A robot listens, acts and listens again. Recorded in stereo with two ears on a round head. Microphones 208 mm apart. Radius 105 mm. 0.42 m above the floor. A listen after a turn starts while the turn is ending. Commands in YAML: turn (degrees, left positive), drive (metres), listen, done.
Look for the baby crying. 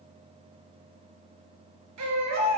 turn: -90
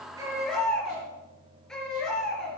done: "Facing the baby crying."